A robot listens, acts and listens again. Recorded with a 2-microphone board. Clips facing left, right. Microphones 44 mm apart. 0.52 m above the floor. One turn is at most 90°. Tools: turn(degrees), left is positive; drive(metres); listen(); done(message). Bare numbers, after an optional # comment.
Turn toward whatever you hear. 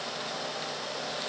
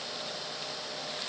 listen()
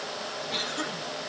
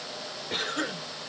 # The cough: about 35° right or 145° right.
turn(-35)
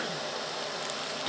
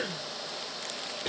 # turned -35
# So it is at 100° right.
turn(-90)
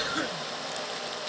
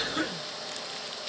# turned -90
done("Facing the cough, 1 to 2 m away.")